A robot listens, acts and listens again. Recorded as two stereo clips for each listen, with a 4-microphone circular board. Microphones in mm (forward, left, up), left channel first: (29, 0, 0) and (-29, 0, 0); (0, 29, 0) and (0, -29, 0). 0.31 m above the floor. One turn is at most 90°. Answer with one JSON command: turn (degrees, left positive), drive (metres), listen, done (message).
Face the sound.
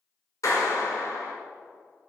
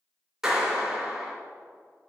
{"turn": -10}
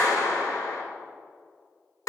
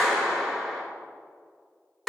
{"done": "Facing the clap, 2 to 4 m away."}